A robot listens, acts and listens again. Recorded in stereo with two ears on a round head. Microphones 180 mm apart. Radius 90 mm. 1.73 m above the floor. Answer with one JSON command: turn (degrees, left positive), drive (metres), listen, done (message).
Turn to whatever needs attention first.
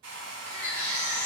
{"turn": 30}
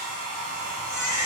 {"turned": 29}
{"turn": -20}
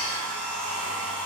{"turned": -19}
{"listen": true}
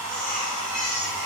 {"done": "Facing the baby crying, under 1 m away."}